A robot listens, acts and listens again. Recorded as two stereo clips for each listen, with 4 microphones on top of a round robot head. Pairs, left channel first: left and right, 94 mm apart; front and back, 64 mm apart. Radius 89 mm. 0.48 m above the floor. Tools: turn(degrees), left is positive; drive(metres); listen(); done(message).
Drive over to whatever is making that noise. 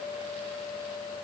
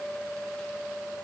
listen()
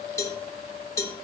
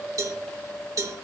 turn(degrees=150)
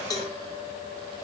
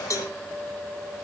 turn(degrees=35)
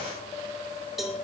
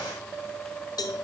drive(metres=1.0)
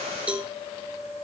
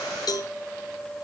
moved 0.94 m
turn(degrees=-15)
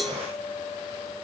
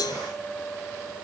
drive(metres=1.0)
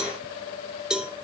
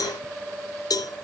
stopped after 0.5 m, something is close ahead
turn(degrees=-10)
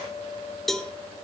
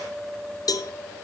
done("I am next to the cowbell.")